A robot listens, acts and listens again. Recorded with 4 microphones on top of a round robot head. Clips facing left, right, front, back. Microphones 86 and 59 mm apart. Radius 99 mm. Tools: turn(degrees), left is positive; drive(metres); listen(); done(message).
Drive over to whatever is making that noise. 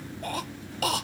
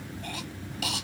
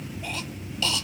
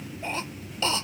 turn(degrees=130)
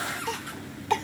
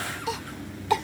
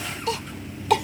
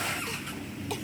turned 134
drive(metres=1.0)
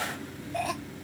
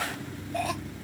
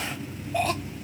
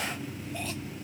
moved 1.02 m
drive(metres=1.0)
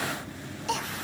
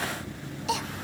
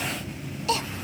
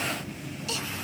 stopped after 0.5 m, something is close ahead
done("Arrived at the cough, straight ahead.")